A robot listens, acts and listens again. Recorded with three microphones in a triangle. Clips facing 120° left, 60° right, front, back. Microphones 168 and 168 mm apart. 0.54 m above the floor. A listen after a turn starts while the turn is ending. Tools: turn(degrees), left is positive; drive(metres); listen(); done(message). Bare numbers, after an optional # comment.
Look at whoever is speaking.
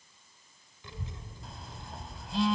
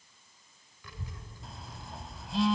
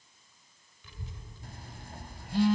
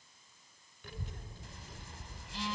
# The child speaking: straight behind.
turn(180)
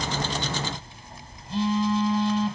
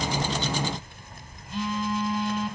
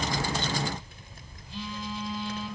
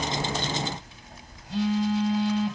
# The child speaking is now 35° right.
turn(-35)
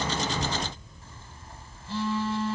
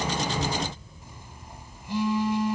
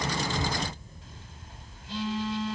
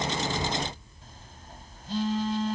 # The child speaking is now 15° left.
turn(15)
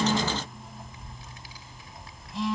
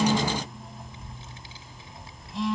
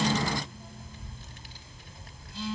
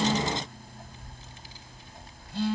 done("Facing the child speaking.")